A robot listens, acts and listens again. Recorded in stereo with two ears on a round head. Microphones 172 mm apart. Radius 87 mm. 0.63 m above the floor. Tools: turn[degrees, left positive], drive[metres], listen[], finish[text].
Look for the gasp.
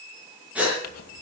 Action: turn[-30]
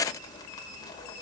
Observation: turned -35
Action: listen[]
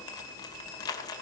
Action: finish[I heard a gasp, but can't make it out now. It was about 25° left or 135° right.]